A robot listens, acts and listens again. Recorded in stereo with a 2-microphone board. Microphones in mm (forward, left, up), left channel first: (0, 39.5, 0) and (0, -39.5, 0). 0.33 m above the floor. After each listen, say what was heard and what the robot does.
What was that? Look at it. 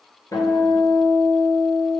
The guitar: about 50° left or 130° left. Turn 50° left.
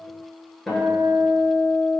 Facing the guitar, under 1 m away.